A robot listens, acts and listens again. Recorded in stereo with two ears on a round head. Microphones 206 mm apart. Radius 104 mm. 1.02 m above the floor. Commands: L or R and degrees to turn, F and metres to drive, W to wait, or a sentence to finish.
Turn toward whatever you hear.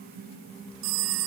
R90
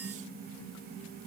W
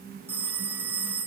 R10
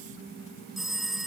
Found it: a phone ringing, straight ahead.